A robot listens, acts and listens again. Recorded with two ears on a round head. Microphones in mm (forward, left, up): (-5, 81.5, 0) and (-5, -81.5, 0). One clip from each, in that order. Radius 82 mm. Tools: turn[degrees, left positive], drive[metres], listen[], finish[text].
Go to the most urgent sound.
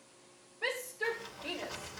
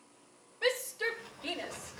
Thought: The shout: about 70° right or 110° right.
Action: turn[-70]
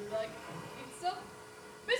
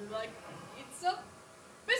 Thought: So it is at 10° right.
Action: turn[-10]
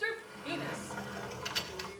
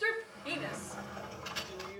Action: drive[1.0]
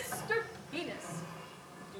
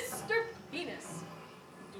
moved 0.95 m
Action: drive[1.0]
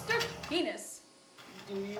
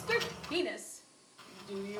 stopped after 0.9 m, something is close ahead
Thought: The shout is now 10° left.
Action: turn[10]
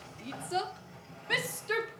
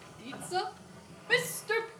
Action: finish[Arrived at the shout, straight ahead.]